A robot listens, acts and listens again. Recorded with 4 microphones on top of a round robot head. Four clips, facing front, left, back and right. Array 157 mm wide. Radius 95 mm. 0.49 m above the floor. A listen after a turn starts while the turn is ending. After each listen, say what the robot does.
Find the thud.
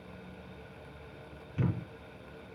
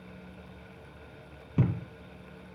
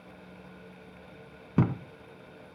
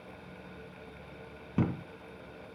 Turn 180° left.
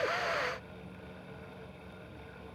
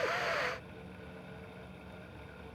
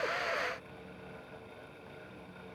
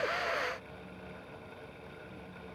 Facing where the thud came from. I can't hear it now.